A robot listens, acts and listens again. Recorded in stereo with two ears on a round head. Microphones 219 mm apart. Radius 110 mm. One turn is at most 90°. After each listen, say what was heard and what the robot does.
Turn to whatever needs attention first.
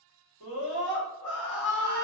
The scream: about 25° left or 155° left. Turn 25° left.
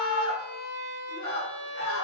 So it is at 130° left. Turn 90° left.
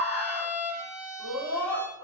The scream is now 20° left. Turn 20° left.
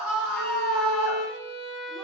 Facing the scream, 1 to 2 m away.